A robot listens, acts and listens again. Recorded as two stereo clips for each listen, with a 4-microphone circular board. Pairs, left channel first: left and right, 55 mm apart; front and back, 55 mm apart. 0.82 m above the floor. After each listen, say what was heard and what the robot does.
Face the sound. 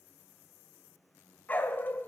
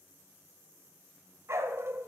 The dog barking: 140° left. Turn 140° left.
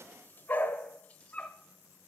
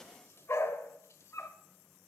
The dog barking is now 25° left. Turn 25° left.
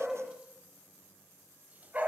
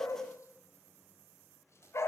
The dog barking is now 35° right. Turn 35° right.
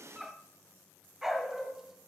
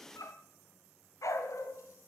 The dog barking is now 10° right. Turn 10° right.
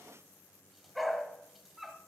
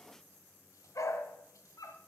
Facing the dog barking, 1 to 2 m away.